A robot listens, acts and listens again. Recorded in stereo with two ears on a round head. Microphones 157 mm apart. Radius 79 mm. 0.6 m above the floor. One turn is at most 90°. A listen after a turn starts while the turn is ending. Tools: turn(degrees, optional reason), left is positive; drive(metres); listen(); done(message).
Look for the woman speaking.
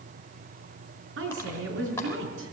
turn(degrees=-90)
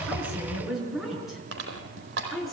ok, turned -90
done("Found it: a woman speaking, straight ahead, over 4 m away.")